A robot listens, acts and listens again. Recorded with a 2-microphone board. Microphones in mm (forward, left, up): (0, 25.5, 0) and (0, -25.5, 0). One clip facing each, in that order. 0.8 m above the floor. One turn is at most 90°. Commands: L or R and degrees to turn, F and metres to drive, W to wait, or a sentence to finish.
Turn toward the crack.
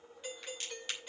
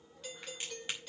R20
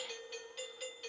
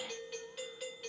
W
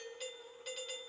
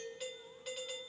I heard a crack, but can't make it out now. It was about straight ahead or 140° right.